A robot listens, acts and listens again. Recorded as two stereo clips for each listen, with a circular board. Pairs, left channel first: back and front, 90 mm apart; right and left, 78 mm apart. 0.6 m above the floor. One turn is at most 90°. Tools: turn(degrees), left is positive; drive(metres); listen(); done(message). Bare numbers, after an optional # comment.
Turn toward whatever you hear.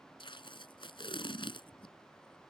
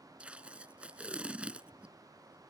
# The tape being pulled: 165° left.
turn(90)
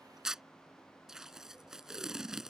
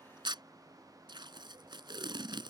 # The tape being pulled is now 85° left.
turn(85)
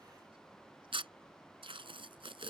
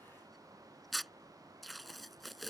done("Found it: tape being pulled, straight ahead.")